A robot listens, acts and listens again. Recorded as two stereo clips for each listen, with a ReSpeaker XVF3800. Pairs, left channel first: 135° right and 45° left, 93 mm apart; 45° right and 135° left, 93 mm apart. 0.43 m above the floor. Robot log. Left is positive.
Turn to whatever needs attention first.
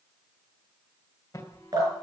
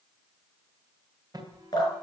note: The alarm: 175° left.
cmd yaw +175
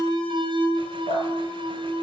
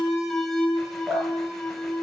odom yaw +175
note: The alarm is now 35° left.
cmd yaw +35
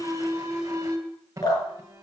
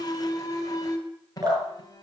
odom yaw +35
end: Found it: an alarm, straight ahead, 2 to 4 m away.